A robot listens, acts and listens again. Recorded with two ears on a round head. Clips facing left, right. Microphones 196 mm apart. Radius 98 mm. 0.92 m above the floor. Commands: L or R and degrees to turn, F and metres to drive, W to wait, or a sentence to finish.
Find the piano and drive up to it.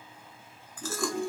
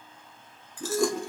R30
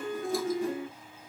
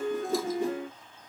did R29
R125
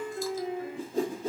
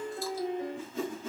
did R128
F1.0
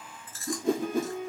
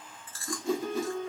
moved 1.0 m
F1.0
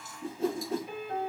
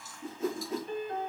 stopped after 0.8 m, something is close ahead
L10
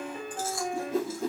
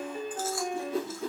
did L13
I am next to the piano.